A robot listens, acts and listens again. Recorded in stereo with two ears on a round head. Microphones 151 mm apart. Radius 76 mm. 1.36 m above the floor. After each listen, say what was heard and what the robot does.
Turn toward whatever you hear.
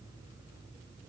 Keep listening.
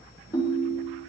The ringtone: about 25° left or 155° left. Turn 25° left.
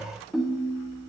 Facing the ringtone.